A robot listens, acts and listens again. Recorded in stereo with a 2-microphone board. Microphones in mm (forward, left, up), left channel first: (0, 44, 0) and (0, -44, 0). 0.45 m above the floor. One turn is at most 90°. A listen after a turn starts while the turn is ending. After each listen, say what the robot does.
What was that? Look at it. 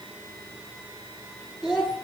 Turn 30° right.
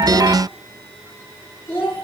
Turn 30° left.
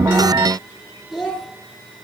Facing the child speaking, over 4 m away.